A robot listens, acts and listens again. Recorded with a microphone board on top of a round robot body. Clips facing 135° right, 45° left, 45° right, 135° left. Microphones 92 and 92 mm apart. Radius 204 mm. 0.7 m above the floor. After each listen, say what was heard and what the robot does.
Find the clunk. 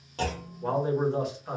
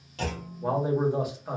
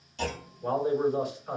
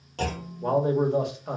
The clunk: 170° left. Turn 170° left.
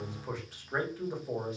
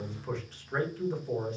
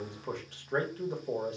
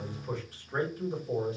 Facing where the clunk came from. I can't hear it now.